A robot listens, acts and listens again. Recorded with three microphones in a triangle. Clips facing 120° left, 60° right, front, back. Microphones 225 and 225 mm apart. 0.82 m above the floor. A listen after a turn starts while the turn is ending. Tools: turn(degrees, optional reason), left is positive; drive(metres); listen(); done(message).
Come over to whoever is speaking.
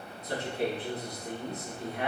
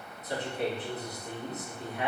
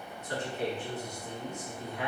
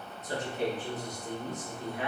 turn(degrees=125, reason="The man speaking: 125° left.")
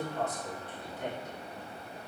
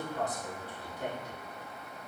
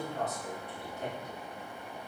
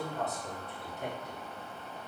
turn(degrees=-15, reason="The man speaking is now 15° right.")
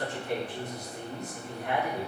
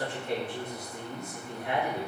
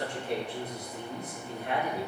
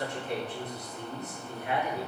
drive(metres=1.0)
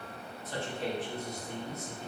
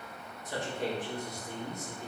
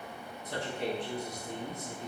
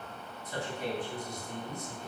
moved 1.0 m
turn(degrees=15, reason="The man speaking is now 15° left.")
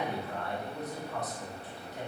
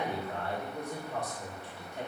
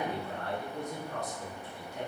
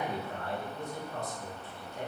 drive(metres=1.0)
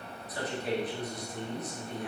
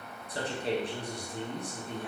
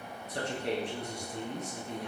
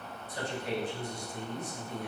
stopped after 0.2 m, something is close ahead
done("Arrived at the man speaking, straight ahead.")